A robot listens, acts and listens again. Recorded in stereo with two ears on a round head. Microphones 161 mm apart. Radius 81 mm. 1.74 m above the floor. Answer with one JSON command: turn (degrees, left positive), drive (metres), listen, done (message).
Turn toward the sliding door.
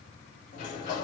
{"turn": 40}
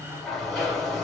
{"done": "Found it: a sliding door, straight ahead."}